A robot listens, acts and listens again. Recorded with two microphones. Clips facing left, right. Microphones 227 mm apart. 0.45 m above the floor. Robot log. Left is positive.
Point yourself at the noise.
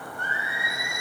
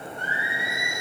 cmd yaw -90
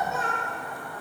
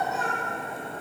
end: Found it: singing, straight ahead, 2 to 4 m away.